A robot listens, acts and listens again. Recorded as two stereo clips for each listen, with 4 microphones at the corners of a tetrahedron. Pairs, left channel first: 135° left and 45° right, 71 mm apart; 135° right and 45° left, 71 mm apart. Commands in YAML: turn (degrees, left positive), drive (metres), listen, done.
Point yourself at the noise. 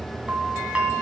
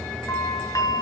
turn: -115
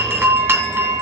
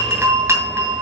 done: "Found it: a doorbell, straight ahead."